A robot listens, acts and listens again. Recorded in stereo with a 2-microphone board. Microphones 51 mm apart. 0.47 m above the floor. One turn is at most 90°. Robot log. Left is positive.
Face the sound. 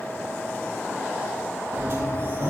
note: The sliding door: about 50° right or 130° right.
cmd yaw -50
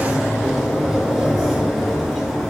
end: Facing the sliding door.